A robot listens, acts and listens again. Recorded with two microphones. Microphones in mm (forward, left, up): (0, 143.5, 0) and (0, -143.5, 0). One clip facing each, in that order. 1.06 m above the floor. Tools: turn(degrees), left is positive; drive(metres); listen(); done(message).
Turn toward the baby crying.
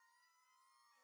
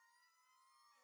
listen()
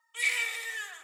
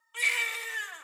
turn(degrees=-65)
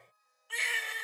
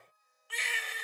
done("Found it: a baby crying, straight ahead.")